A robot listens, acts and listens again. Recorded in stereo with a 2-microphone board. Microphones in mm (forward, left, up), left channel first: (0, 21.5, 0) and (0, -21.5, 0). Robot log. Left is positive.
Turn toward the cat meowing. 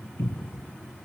cmd idle
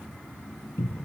cmd idle
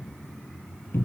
end: I can't make out a cat meowing, only a cupboard door.